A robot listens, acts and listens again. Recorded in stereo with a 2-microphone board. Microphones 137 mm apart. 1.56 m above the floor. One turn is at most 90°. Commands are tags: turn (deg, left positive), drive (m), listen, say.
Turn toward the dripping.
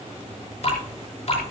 <turn deg="55"/>
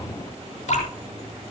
<turn deg="70"/>
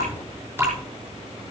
<turn deg="-15"/>
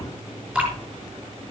<say>Facing the dripping.</say>